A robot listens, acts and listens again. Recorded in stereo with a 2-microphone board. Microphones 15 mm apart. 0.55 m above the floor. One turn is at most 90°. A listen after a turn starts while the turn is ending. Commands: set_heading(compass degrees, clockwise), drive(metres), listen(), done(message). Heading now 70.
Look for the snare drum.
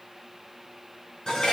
listen()
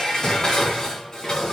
listen()
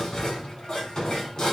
done("I can't make out a snare drum, only dishes clattering.")